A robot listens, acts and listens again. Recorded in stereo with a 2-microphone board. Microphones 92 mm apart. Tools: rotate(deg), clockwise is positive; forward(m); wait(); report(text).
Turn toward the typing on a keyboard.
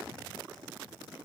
wait()
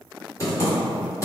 rotate(-35)
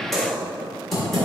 report("Found it: typing on a keyboard, straight ahead.")